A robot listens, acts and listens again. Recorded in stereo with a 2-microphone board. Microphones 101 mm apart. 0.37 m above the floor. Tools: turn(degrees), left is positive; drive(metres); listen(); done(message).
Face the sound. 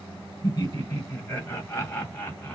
turn(degrees=20)
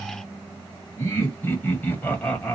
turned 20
turn(degrees=30)
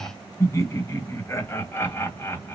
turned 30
turn(degrees=25)
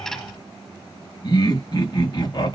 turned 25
turn(degrees=135)
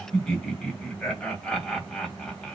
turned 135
turn(degrees=10)
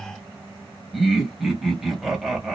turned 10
done("Facing the laughter.")